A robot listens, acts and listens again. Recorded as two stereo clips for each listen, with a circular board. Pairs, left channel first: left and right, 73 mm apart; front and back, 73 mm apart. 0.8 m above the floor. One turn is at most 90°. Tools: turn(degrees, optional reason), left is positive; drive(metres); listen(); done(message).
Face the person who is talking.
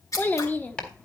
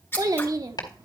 turn(degrees=90, reason="The child speaking: 155° left.")
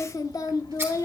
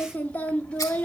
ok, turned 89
turn(degrees=65, reason="The child speaking is now 65° left.")
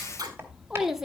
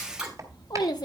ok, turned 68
done("Found it: a child speaking, straight ahead, 1 to 2 m away.")